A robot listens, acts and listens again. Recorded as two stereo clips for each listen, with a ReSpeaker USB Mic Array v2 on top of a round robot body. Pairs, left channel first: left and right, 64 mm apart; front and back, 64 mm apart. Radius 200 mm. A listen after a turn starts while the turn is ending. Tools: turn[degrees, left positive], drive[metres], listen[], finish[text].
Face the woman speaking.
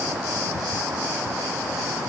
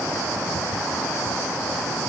Action: listen[]
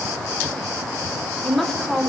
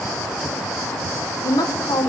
Action: finish[Found it: a woman speaking, straight ahead, 2 to 4 m away.]